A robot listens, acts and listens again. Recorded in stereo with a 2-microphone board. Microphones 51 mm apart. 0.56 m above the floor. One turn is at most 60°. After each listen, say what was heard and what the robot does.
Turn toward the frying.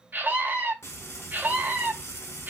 The frying: about 60° left or 120° left. Turn 60° left.
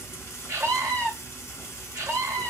So it is at 50° left. Turn 50° left.
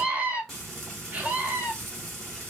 Facing the frying, 2 to 4 m away.